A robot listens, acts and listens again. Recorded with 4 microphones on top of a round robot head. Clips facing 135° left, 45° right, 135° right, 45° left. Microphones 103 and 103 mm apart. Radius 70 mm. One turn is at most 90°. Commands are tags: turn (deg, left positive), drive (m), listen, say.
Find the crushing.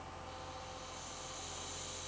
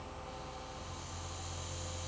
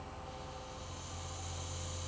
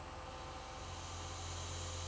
<listen/>
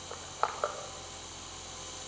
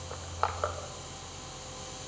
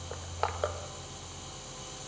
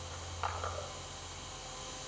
<turn deg="-90"/>
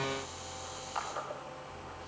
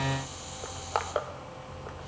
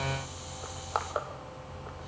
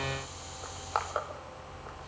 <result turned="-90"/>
<turn deg="-45"/>
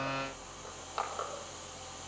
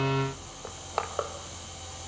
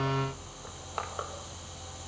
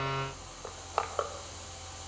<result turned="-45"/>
<say>Facing the crushing, 1 to 2 m away.</say>